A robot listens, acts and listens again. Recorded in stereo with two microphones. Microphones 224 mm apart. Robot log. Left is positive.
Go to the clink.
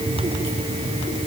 cmd idle
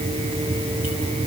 cmd idle
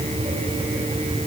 end: I can't make out a clink to turn to.